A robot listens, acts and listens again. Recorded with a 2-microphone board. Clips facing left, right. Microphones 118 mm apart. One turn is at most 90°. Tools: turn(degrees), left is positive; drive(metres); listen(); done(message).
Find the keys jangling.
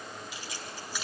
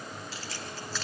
turn(degrees=30)
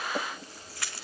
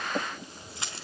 turn(degrees=-20)
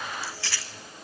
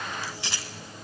turn(degrees=-20)
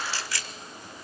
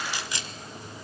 turn(degrees=-20)
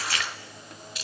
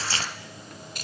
turn(degrees=-50)
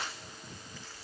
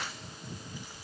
listen()
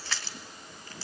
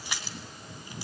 turn(degrees=-15)
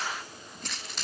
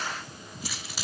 done("Found it: keys jangling, straight ahead.")